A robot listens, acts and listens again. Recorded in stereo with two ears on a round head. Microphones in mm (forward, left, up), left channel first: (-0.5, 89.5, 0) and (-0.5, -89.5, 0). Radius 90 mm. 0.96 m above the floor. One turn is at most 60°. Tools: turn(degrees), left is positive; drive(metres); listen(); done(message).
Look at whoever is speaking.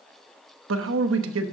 turn(degrees=-60)
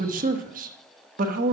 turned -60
turn(degrees=-45)
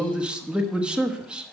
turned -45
done("Facing the man speaking, 1 to 2 m away.")